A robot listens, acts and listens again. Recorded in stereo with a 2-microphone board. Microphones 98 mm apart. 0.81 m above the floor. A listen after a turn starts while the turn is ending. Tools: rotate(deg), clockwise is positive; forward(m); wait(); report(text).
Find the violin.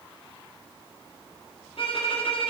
rotate(-65)
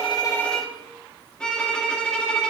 rotate(-10)
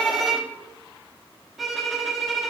report("Facing the violin, 1 to 2 m away.")